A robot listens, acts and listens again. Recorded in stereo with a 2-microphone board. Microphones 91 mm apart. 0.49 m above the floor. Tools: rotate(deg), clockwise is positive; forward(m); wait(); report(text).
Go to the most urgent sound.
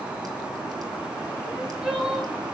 rotate(30)
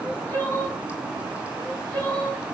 rotate(-25)
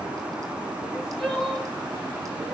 forward(1.0)
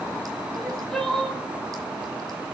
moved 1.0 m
forward(1.0)
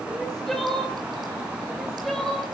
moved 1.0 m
forward(1.0)
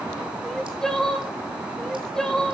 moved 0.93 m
forward(1.0)
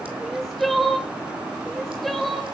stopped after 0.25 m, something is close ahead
report("I am next to the crying.")